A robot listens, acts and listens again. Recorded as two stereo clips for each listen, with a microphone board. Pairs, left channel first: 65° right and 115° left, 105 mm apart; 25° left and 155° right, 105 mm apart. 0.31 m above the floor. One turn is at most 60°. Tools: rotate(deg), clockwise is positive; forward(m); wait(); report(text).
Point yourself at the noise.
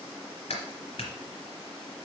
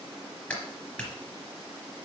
rotate(60)
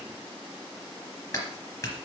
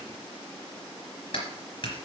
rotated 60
rotate(10)
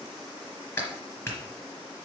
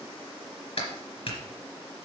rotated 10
report("Facing the clap, 2 to 4 m away.")